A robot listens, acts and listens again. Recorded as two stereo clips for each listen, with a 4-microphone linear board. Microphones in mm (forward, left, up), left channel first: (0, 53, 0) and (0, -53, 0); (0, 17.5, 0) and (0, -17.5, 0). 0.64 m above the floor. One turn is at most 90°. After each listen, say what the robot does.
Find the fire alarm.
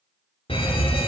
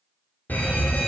Turn 55° left.
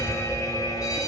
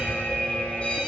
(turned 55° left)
Turn 40° left.
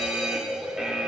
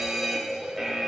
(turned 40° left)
Turn 10° right.
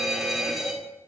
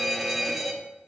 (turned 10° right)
Facing the fire alarm, 2 to 4 m away.